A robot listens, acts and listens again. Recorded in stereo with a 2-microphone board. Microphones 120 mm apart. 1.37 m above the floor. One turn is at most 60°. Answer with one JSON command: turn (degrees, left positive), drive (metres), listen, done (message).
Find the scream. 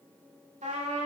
{"listen": true}
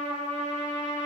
{"listen": true}
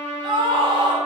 {"turn": -45}
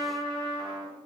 {"listen": true}
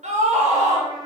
{"turn": -60}
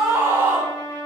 {"turn": -15}
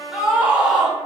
{"turn": -10}
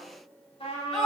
{"done": "Found it: a scream, straight ahead."}